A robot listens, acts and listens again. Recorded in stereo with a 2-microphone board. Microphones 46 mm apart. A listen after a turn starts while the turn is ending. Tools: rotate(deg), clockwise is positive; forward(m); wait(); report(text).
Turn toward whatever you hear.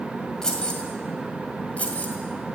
rotate(-30)
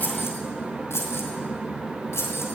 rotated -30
rotate(-100)
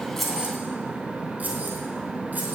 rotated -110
rotate(10)
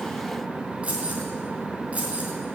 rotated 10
rotate(30)
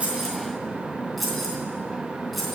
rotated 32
report("Facing the keys jangling, 2 to 4 m away.")